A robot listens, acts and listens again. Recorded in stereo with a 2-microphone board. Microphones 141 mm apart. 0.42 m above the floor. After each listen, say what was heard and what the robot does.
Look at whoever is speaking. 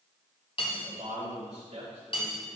The man speaking: about 55° right or 125° right. Turn 55° right.
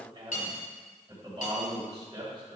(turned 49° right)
So it is at 45° right. Turn 45° right.
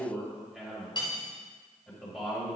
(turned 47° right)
Facing the man speaking, 2 to 4 m away.